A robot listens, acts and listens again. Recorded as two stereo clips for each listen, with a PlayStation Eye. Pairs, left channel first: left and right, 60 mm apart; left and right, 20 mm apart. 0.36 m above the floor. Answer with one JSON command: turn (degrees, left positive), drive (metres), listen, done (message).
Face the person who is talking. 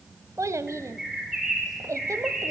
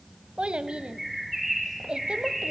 {"turn": -55}
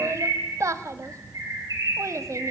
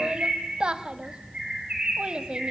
{"turn": -60}
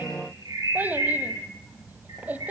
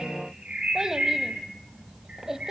{"turn": -30}
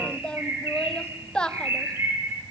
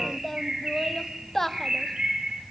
{"turn": 15}
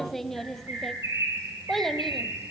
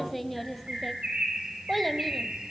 {"done": "Facing the child speaking, 1 to 2 m away."}